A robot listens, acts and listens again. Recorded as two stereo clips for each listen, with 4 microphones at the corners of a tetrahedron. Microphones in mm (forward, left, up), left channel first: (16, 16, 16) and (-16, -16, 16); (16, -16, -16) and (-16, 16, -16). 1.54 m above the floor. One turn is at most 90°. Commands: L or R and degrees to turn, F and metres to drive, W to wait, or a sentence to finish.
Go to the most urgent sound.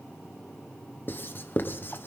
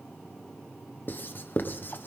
W
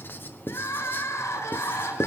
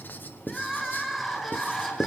L50
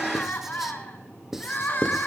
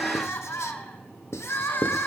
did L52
F1.0
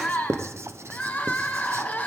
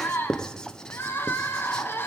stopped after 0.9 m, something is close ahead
R10
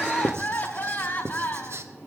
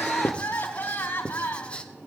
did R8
Blocked. The crying is further on, straight ahead.